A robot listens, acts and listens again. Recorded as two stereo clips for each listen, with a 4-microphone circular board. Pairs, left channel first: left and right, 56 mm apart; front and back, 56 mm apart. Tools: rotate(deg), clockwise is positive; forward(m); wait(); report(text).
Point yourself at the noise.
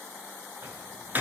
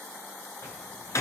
rotate(35)
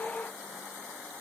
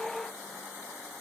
report("I heard a door slam from this way, but can't make it out now.")